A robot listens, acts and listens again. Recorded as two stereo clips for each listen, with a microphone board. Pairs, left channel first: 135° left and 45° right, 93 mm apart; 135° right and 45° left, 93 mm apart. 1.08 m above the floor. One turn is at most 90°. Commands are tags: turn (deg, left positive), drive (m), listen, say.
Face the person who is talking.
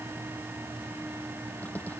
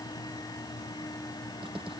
<listen/>
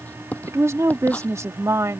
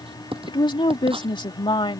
<turn deg="-90"/>
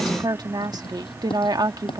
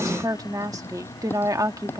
<say>Found it: a woman speaking, straight ahead.</say>